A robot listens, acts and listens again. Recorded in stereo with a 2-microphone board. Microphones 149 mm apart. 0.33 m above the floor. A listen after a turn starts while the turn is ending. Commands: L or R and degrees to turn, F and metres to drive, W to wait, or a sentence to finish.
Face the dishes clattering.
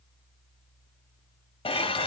L40
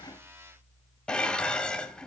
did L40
L10
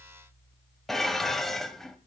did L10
Found it: dishes clattering, straight ahead.